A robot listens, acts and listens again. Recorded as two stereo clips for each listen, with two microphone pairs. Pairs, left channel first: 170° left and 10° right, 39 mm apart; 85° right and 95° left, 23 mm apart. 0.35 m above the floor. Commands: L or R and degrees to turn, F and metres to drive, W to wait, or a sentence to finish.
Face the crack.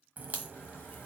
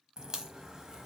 L35
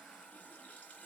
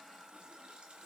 I heard a crack from this way, but can't make it out now.